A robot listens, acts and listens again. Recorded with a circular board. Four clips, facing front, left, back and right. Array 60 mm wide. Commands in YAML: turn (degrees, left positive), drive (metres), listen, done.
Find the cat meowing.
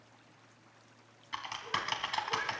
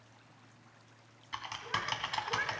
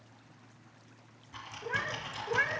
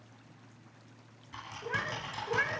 turn: -155
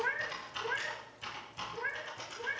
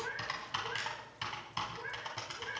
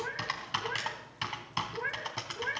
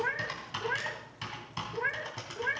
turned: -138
turn: -110
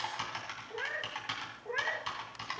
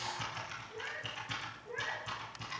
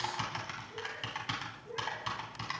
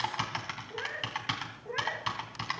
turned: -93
turn: -25
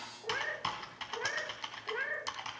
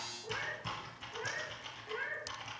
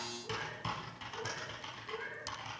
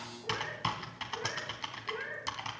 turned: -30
done: "Facing the cat meowing."